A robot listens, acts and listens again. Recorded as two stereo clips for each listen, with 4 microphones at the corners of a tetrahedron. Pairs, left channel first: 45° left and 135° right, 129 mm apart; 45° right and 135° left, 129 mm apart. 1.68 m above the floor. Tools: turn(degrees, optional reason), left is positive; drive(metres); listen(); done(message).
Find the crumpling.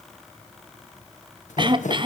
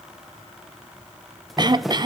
turn(degrees=45, reason="The crumpling: 45° left.")
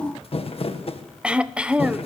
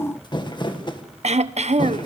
done("Facing the crumpling.")